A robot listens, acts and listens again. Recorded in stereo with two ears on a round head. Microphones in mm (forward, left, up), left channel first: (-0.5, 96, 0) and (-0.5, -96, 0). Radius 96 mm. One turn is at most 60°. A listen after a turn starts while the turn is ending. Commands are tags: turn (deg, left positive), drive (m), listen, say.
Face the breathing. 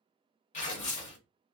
<listen/>
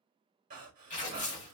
<turn deg="-40"/>
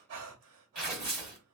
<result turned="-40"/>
<turn deg="-60"/>
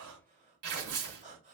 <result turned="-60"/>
<turn deg="-35"/>
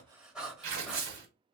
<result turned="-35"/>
<say>Found it: breathing, straight ahead, 1 to 2 m away.</say>